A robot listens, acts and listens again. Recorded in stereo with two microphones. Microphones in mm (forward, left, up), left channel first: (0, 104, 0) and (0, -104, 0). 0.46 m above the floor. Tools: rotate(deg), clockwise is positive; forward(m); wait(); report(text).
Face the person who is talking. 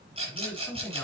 rotate(-30)
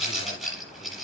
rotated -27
wait()
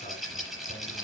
wait()
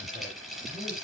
report("I heard a man speaking, but can't make it out now. It was about 15° right or 145° left.")